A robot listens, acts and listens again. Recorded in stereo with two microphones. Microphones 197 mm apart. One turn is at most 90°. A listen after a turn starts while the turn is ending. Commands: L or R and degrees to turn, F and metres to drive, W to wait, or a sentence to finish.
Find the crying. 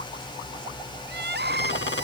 R60
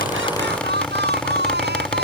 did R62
R60
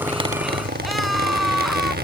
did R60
Found it: crying, straight ahead.